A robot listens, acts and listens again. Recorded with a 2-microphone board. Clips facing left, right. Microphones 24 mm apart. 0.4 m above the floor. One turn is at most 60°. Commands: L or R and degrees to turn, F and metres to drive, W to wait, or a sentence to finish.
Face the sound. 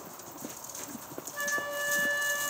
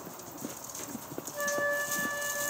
L25
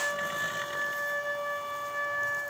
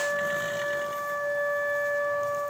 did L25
L60
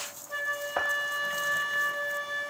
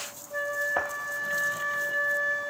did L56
L60
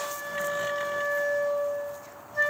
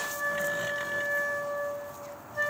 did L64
L10
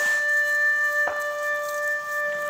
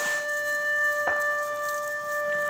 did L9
Facing the flute.